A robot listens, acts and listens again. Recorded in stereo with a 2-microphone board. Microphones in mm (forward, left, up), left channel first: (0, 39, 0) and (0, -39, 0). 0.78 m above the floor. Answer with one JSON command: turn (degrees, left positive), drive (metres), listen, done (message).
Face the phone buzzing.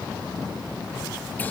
{"listen": true}
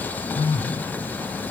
{"turn": 90}
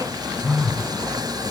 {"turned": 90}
{"done": "Found it: a phone buzzing, straight ahead."}